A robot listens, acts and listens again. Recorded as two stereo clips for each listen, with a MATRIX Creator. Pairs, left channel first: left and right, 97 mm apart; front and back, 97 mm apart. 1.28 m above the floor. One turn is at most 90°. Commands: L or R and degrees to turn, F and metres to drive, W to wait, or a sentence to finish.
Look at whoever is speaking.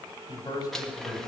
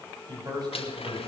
L90
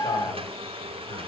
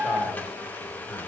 L50
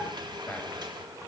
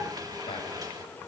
L20
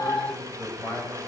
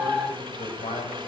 L15
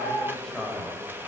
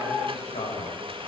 Facing the man speaking, over 4 m away.